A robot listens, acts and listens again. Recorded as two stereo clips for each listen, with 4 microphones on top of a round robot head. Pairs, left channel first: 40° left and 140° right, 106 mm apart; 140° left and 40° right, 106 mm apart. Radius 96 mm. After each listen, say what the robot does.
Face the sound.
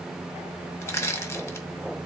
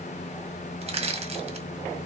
Turn 20° right.
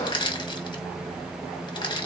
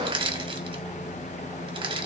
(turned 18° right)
Facing the crushing.